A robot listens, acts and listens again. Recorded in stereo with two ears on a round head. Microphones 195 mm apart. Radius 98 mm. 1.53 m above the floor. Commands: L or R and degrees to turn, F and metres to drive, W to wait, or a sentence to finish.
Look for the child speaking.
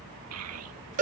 R90
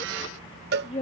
L30
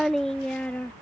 Found it: a child speaking, straight ahead.